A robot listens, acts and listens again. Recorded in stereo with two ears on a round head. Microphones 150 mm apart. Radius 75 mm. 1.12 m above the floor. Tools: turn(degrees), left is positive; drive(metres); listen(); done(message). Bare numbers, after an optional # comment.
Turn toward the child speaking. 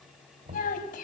# The child speaking: about 55° left or 125° left.
turn(55)
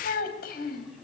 # So it is at 55° left.
turn(55)
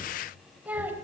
# The child speaking is now 10° right.
turn(-10)
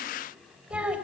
# The child speaking is now 10° right.
turn(-10)
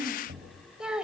done("Found it: a child speaking, straight ahead, 2 to 4 m away.")